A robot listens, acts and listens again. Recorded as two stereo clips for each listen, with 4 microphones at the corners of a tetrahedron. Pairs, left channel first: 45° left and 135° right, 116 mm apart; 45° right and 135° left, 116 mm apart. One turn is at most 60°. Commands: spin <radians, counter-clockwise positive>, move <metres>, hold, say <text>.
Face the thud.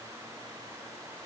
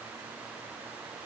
hold
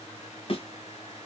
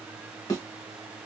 spin 0.17
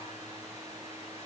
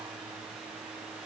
say Facing where the thud came from. I can't hear it now.